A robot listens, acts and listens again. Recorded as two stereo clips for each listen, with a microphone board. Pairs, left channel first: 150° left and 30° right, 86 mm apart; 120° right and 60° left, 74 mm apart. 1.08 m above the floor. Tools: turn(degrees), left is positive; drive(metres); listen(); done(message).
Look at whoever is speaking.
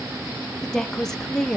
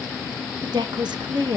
turn(degrees=65)
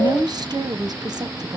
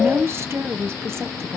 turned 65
turn(degrees=10)
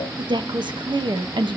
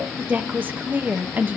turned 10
done("Facing the woman speaking, under 1 m away.")